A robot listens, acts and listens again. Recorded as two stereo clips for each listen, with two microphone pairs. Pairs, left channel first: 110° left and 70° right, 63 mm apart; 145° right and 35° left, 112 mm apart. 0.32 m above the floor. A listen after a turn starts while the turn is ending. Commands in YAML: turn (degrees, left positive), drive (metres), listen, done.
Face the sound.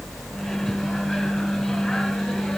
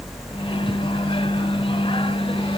turn: -160
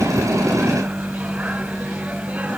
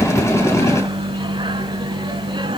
done: "Found it: a microwave, straight ahead, 1 to 2 m away."